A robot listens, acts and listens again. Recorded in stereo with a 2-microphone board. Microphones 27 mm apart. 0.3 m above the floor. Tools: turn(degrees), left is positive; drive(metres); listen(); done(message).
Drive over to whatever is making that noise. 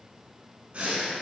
turn(degrees=-40)
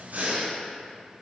turn(degrees=-100)
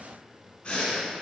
turn(degrees=30)
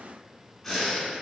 drive(metres=1.0)
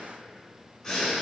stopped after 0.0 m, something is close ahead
turn(degrees=15)
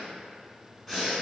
done("Something is in my way. I am facing the breathing but have not reached it.")